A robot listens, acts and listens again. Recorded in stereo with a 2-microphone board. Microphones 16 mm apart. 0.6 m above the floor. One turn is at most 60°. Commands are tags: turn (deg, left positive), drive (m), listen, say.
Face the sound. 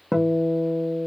<turn deg="-30"/>
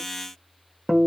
<turn deg="-60"/>
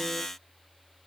<turn deg="-60"/>
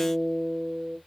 <turn deg="-10"/>
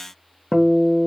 <say>Facing the guitar.</say>